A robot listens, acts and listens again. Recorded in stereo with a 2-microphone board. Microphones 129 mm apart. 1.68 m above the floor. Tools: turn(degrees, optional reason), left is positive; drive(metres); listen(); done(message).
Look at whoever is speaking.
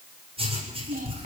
turn(degrees=-90)
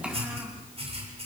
listen()
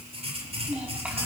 done("Found it: a child speaking, straight ahead, over 4 m away.")